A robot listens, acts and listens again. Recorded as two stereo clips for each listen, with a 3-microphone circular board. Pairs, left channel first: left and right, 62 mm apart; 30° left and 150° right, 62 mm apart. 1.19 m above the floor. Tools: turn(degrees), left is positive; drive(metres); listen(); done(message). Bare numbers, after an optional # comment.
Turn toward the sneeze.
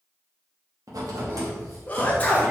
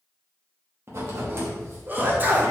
# The sneeze: 155° left.
turn(155)
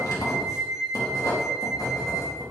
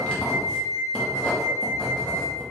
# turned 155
done("Facing where the sneeze came from. I can't hear it now.")